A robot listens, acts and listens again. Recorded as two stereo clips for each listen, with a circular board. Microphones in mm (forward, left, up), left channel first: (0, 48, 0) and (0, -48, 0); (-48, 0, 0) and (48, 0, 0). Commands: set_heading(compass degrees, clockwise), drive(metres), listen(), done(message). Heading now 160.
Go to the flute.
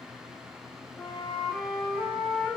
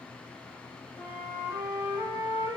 set_heading(95)
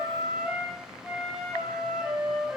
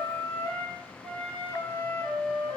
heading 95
drive(1.0)
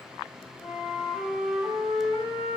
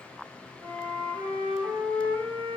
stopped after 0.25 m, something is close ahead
done("Blocked. The flute is further on, straight ahead.")